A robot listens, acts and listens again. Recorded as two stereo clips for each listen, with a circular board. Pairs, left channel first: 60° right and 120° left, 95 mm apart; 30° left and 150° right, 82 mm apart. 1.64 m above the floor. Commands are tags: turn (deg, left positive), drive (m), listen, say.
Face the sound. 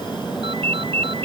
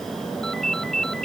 <turn deg="115"/>
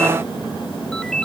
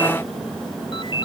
<turn deg="25"/>
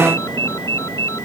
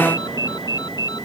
<say>Found it: a ringtone, straight ahead.</say>